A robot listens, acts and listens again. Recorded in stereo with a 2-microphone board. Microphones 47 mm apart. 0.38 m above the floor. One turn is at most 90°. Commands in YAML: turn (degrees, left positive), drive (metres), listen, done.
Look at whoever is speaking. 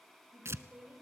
turn: -30
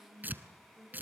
turn: -90
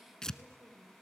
turn: -65
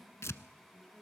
done: "Found it: a woman speaking, straight ahead, over 4 m away."